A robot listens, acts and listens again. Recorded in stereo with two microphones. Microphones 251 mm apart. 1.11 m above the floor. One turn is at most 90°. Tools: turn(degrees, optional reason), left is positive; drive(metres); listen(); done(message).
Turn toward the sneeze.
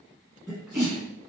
turn(degrees=30)
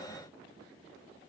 listen()
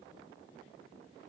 done("I heard a sneeze, but can't make it out now. It was about 30° right or 150° left.")